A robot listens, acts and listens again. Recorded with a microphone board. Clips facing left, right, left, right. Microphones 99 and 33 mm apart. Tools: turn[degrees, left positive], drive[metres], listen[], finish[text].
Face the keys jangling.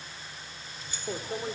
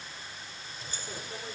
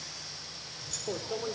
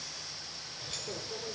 Thought: The keys jangling: about 40° right or 140° right.
Action: turn[-40]
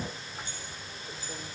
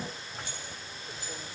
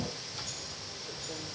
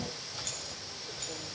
Thought: So it is at 100° right.
Action: turn[-100]
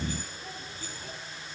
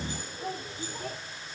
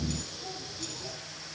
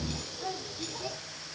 Action: listen[]
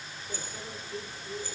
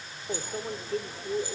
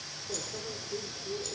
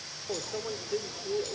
Action: listen[]
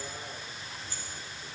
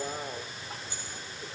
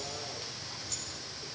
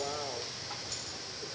Thought: The keys jangling is now 20° right.
Action: turn[-20]
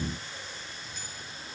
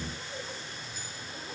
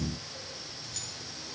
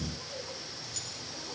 Action: finish[Found it: keys jangling, straight ahead.]